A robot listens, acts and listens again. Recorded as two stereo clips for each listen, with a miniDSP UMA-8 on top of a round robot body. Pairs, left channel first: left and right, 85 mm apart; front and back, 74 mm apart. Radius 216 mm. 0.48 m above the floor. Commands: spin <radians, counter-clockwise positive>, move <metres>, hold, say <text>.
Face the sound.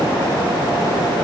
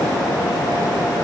hold
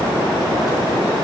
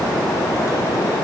hold
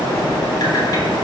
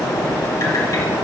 say I can't make out anything to turn to.